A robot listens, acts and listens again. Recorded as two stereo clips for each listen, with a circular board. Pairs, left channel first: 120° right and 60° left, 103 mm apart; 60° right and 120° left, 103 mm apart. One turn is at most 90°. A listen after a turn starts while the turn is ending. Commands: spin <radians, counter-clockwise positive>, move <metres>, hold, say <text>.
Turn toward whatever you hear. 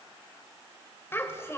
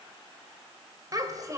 spin 1.57
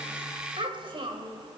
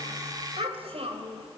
spin 1.57
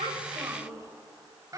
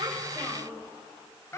say Facing the child speaking, 2 to 4 m away.